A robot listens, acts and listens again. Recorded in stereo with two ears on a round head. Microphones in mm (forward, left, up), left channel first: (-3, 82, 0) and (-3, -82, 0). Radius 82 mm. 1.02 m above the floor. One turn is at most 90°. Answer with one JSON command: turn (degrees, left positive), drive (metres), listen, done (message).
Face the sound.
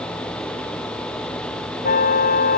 {"turn": 50}
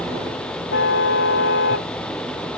{"turn": 80}
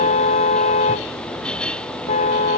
{"turn": 40}
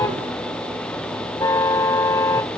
{"turn": 15}
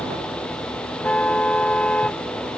{"done": "Found it: a car horn, straight ahead."}